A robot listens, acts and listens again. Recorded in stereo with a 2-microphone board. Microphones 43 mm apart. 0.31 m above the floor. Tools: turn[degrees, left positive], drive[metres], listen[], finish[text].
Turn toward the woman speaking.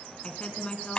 Thought: The woman speaking: about 30° left or 150° left.
Action: turn[30]
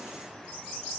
Action: listen[]
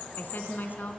Thought: So it is at 120° left.
Action: turn[120]
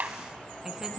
Action: listen[]
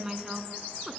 Thought: The woman speaking is now 15° right.
Action: turn[-15]
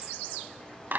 Action: listen[]
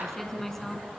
Action: finish[Found it: a woman speaking, straight ahead, 2 to 4 m away.]